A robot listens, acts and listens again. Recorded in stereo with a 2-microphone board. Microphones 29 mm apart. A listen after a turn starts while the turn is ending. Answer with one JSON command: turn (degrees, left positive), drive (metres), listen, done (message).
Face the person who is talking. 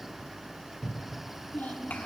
{"turn": 75}
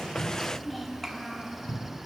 {"done": "Found it: a child speaking, straight ahead."}